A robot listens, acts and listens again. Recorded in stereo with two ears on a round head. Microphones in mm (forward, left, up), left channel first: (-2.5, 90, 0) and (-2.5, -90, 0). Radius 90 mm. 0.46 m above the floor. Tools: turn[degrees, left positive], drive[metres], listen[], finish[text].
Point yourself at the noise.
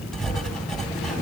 Action: turn[30]
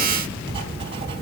Thought: So it is at 30° right.
Action: turn[-30]
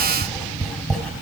Action: finish[Facing the writing.]